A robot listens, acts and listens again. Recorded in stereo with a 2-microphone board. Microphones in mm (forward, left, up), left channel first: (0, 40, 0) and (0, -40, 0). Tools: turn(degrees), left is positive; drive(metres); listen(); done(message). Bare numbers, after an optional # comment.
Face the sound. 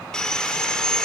turn(30)
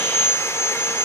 # So it is at 145° left.
turn(145)
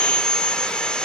# The sawing is now 10° left.
turn(10)
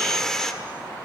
done("Facing the sawing, 1 to 2 m away.")